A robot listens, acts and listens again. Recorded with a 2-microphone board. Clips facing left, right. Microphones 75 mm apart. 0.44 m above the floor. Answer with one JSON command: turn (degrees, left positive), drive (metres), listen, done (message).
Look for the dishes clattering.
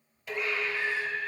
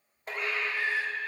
{"turn": -45}
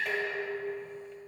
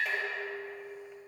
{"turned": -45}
{"done": "Found it: dishes clattering, straight ahead."}